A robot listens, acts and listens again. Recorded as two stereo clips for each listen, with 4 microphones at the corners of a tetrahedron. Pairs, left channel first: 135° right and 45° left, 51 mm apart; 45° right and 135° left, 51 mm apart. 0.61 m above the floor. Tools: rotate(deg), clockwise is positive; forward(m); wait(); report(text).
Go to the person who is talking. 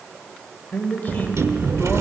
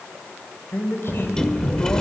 rotate(80)
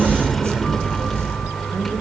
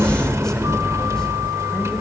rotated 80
wait()
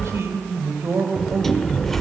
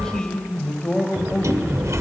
rotate(-30)
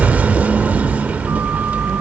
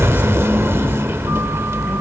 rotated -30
wait()
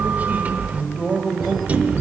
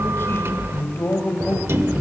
rotate(10)
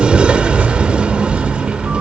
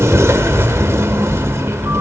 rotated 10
wait()
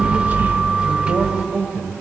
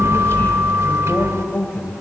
forward(1.0)
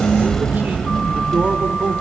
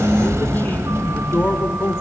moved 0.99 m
forward(1.0)
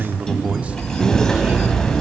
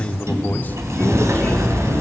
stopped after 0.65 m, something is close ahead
rotate(10)
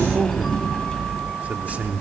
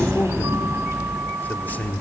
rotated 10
report("Arrived at the man speaking, straight ahead.")